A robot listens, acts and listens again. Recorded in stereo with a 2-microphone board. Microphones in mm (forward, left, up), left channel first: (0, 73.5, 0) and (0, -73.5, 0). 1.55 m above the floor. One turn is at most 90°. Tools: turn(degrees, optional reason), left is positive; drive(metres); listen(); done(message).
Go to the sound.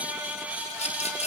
turn(degrees=50, reason="The rattle: about 50° left or 130° left.")
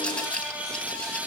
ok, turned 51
turn(degrees=10, reason="So it is at 10° left.")
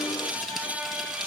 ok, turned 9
listen()
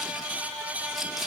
listen()
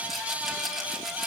drive(metres=1.0)
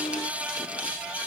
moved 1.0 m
listen()
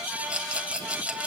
turn(degrees=-10, reason="The rattle is now 10° right.")
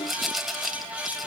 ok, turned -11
drive(metres=1.0)
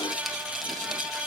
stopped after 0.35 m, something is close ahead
listen()
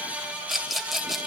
done("I am next to the rattle.")